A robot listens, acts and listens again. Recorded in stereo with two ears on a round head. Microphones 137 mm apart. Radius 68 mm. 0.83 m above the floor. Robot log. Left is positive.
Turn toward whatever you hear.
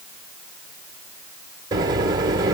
note: The microwave: about 25° right or 155° right.
cmd yaw -25
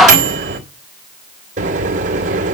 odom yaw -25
note: So it is at 130° right.
cmd yaw -130
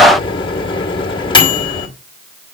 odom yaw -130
note: The microwave is now 35° left.
cmd yaw +35
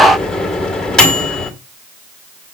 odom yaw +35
end: Found it: a microwave, straight ahead, 2 to 4 m away.